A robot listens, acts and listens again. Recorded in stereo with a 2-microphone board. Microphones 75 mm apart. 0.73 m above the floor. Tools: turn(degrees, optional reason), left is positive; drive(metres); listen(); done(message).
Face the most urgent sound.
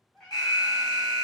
turn(degrees=60, reason="The alarm: about 60° left or 120° left.")
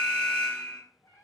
turn(degrees=25, reason="So it is at 25° left.")
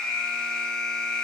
turn(degrees=15, reason="The alarm is now 15° left.")
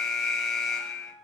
done("Found it: an alarm, straight ahead.")